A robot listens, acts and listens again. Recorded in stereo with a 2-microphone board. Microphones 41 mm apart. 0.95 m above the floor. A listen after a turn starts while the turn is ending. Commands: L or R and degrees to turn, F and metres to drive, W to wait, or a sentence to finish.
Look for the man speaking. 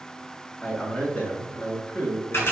L60
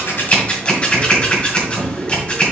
W
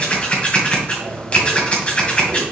W
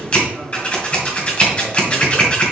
I heard a man speaking, but can't make it out now. It was about straight ahead or 60° left.